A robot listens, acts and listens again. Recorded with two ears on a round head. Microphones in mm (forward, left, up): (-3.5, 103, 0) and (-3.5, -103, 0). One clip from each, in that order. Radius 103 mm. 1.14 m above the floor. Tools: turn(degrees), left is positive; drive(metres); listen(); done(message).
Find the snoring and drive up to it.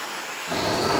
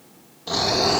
turn(degrees=-50)
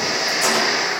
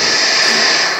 turn(degrees=-80)
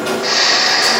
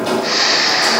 turn(degrees=10)
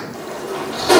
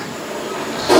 listen()
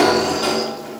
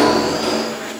listen()
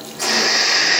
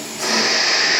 drive(metres=1.0)
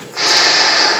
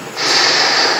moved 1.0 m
turn(degrees=10)
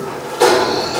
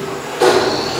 drive(metres=1.0)
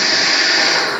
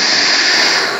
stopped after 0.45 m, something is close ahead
turn(degrees=-10)
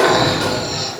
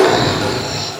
done("I am next to the snoring.")